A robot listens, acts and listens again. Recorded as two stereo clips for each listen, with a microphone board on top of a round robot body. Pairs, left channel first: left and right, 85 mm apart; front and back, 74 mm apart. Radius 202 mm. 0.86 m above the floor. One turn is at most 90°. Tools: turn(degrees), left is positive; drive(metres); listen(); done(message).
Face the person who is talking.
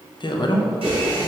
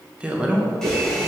turn(degrees=90)
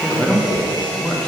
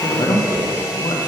turn(degrees=10)
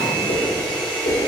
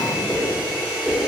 listen()
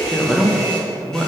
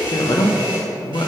done("Facing the man speaking.")